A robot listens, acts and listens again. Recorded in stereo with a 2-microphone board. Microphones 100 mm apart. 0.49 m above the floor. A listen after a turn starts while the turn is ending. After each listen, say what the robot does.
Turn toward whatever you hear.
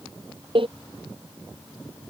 Turn 60° right.
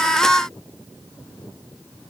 Keep listening.
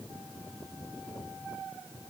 I heard a door slam, but can't make it out now. It was about straight ahead or 60° right.